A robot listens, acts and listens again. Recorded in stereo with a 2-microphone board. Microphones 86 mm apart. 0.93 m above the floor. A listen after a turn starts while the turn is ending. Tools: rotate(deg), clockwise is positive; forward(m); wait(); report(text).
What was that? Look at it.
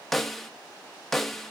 rotate(-30)
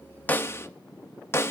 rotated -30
rotate(-150)
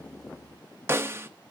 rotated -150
rotate(30)
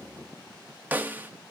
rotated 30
rotate(20)
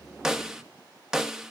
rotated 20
report("Found it: a snare drum, straight ahead, 1 to 2 m away.")